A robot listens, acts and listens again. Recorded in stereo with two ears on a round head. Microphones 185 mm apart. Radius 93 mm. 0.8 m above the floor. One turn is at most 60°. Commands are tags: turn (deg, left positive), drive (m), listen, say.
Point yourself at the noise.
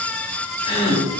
<turn deg="25"/>
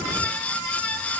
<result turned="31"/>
<listen/>
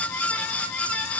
<say>I heard a gasp, but can't make it out now. It was about 5° right or 120° left.</say>